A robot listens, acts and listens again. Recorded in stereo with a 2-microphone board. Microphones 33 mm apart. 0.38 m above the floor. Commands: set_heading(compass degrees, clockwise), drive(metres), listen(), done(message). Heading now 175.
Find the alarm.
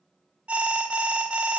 set_heading(215)
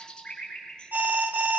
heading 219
set_heading(309)
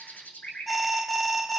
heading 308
done("Found it: an alarm, straight ahead.")